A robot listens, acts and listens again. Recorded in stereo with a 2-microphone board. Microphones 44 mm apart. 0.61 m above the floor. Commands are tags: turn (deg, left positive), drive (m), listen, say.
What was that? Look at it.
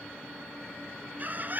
<turn deg="-45"/>
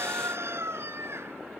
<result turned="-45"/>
<turn deg="-85"/>
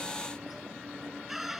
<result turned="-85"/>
<say>Found it: a bird, straight ahead.</say>